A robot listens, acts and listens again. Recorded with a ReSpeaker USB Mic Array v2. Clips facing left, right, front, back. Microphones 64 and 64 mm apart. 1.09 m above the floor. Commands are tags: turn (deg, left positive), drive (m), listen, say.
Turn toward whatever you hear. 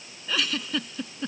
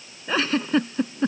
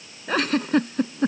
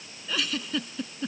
<turn deg="-40"/>
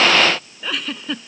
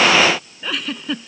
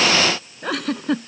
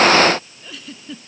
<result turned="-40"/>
<say>Facing the giggle.</say>